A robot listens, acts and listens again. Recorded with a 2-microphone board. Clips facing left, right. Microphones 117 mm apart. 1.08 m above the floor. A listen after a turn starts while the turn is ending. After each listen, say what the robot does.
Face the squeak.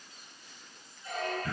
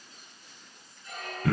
Turn 90° left.
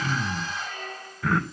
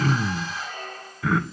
Turn 10° right.
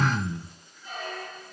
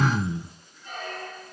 Found it: a squeak, straight ahead, over 4 m away.